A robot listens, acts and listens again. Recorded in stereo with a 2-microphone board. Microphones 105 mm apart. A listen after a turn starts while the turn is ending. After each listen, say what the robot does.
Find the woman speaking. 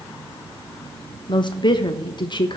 Turn 45° left.
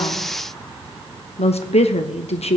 Turn 90° left.
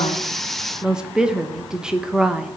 Facing the woman speaking.